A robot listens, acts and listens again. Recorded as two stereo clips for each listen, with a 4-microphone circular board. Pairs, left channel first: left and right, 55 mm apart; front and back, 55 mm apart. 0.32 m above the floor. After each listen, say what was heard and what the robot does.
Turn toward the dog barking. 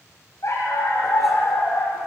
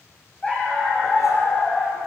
The dog barking: 65° left. Turn 65° left.
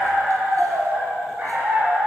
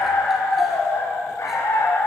The dog barking is now 35° right. Turn 35° right.
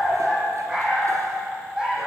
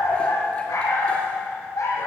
The dog barking is now 15° right. Turn 15° right.
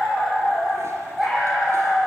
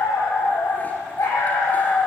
The dog barking is now 10° right. Turn 10° right.
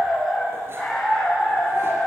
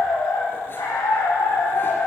Facing the dog barking, over 4 m away.